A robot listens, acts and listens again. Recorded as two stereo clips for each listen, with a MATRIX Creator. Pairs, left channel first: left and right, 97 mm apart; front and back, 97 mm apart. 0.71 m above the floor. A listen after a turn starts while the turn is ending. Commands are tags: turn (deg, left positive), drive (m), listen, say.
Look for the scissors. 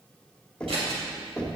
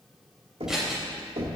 <turn deg="-95"/>
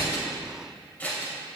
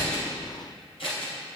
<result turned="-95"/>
<turn deg="20"/>
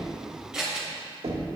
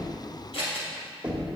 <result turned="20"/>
<turn deg="-10"/>
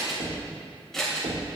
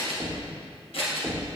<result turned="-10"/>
<say>Found it: scissors, straight ahead, 2 to 4 m away.</say>